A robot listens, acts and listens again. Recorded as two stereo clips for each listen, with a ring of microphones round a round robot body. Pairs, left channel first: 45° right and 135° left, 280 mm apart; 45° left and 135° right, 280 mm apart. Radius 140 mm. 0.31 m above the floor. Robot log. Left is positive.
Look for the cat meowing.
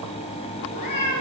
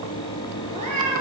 note: The cat meowing: 70° right.
cmd yaw -70
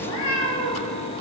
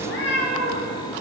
note: The cat meowing is now 10° right.
cmd yaw -10
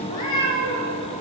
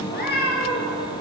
note: The cat meowing is now 15° right.
cmd yaw -15
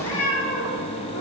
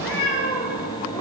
note: The cat meowing is now 15° right.
cmd yaw -15
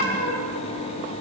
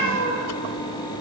note: The cat meowing is now 10° right.
cmd yaw -10
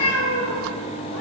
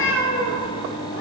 end: Facing the cat meowing.